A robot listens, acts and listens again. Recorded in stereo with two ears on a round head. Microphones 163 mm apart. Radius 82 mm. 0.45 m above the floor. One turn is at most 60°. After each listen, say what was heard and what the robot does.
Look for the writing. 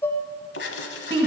The writing: about 70° left or 110° left. Turn 60° left.
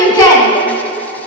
Keep listening.
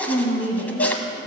Keep listening.
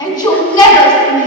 I heard writing, but can't make it out now. It was about 10° left or 50° left.